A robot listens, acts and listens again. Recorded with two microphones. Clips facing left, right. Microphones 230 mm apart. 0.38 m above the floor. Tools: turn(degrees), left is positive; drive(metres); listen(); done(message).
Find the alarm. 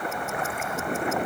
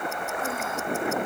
listen()
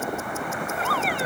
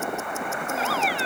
turn(degrees=50)
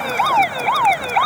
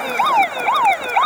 done("Facing the alarm.")